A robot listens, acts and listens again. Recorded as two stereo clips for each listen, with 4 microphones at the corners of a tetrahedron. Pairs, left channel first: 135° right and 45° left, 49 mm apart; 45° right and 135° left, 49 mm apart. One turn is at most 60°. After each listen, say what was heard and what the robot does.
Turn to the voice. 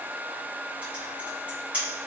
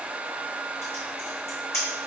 Keep listening.
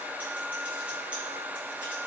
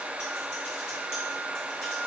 Keep listening.
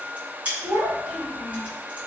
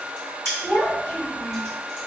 The child speaking: 15° left. Turn 15° left.
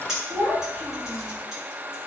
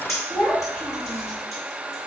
Facing the child speaking, 1 to 2 m away.